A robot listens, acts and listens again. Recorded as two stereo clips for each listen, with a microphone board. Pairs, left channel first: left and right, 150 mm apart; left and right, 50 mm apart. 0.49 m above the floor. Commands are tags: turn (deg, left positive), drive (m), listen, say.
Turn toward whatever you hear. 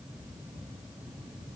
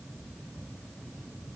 <listen/>
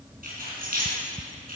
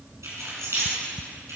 <turn deg="-70"/>
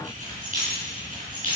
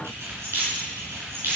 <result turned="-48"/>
<turn deg="-60"/>
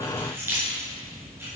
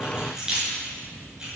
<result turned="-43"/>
<turn deg="-15"/>
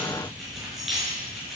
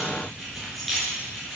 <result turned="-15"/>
<say>Facing the keys jangling, over 4 m away.</say>